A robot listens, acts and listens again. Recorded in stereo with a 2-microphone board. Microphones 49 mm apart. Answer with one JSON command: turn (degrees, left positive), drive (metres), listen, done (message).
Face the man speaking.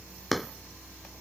{"listen": true}
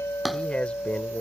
{"turn": 25}
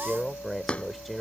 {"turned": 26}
{"done": "Found it: a man speaking, straight ahead."}